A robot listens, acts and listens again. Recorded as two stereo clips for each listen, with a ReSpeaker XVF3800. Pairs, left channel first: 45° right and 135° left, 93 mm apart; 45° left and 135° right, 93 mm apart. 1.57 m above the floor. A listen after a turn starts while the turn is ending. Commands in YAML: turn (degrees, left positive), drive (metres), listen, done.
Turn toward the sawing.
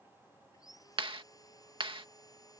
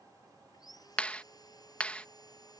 done: "Facing the sawing."